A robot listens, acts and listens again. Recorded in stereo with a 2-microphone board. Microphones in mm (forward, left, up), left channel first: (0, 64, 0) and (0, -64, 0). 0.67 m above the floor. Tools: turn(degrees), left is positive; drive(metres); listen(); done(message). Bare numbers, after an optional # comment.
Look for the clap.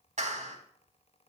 # The clap: about 65° right or 115° right.
turn(-65)
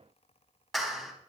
done("Facing the clap.")